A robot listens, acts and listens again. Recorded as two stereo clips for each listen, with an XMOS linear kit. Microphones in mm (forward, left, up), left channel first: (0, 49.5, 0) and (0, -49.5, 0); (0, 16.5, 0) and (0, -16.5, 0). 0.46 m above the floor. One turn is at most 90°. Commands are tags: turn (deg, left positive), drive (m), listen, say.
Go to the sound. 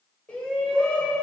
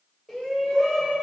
<turn deg="30"/>
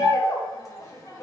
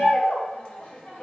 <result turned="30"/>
<turn deg="90"/>
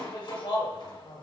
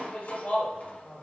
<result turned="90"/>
<turn deg="70"/>
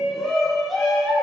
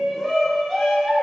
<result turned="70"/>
<drive m="1.0"/>
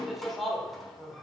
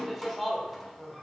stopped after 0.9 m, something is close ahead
<say>Arrived at the shout, straight ahead.</say>